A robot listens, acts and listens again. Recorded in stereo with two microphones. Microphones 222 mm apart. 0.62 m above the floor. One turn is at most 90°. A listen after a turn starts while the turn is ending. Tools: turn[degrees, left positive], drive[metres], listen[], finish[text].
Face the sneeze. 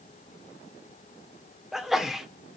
Action: turn[30]
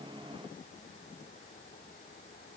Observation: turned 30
Action: listen[]
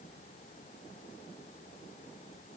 Action: finish[I heard a sneeze, but can't make it out now. It was about 30° right or 150° left.]